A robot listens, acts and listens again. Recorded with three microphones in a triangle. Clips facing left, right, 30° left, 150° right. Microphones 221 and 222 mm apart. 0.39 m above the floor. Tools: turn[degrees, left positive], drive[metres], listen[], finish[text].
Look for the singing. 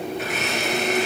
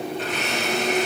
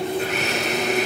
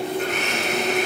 Action: listen[]
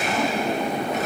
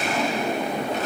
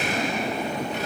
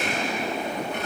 Action: listen[]
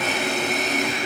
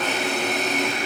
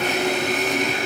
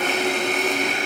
Action: finish[I can't make out singing to turn to.]